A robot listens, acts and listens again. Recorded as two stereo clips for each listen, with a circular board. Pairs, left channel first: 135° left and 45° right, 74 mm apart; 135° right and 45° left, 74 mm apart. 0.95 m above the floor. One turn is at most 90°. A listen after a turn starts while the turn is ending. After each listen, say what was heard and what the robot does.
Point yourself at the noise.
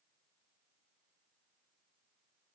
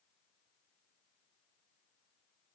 Keep listening.
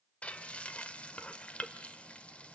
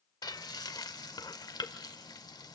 The frying: 155° right. Turn 90° right.
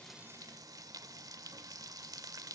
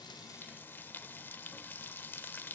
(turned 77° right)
The frying is now 75° right. Turn 75° right.
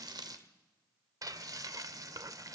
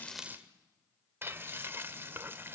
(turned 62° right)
The frying is now 15° right. Turn 15° right.
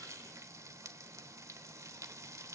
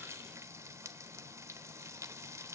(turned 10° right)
Found it: frying, straight ahead.